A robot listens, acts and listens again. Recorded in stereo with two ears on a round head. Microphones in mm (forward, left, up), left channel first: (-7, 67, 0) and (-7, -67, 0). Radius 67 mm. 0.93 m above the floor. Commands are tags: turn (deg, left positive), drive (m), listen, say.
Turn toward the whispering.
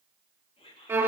<turn deg="35"/>
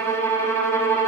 <listen/>
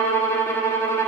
<listen/>
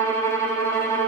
<say>I heard whispering, but can't make it out now. It was about straight ahead or 110° left.</say>